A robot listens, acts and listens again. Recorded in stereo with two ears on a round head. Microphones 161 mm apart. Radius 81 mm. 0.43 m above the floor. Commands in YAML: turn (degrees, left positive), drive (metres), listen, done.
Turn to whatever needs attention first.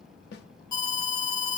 turn: 25
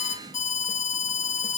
turn: 130
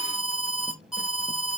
done: "Found it: an alarm, straight ahead."